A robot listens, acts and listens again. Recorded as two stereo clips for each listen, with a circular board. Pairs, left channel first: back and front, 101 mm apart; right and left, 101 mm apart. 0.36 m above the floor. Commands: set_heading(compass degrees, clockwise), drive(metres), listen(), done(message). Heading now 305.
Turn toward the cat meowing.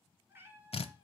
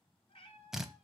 set_heading(10)
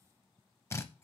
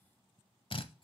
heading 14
listen()
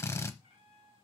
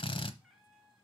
done("Facing the cat meowing, 1 to 2 m away.")